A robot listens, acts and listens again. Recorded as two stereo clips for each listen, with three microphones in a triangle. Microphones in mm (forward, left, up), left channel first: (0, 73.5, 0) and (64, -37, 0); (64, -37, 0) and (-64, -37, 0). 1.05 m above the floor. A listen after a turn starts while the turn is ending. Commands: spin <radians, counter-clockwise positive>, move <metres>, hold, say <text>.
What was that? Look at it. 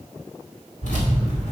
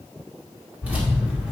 spin 1.75
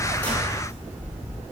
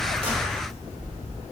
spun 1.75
spin 0.26
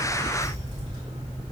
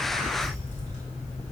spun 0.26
spin -0.17
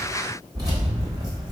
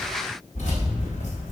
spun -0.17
say Facing the keys jangling, 2 to 4 m away.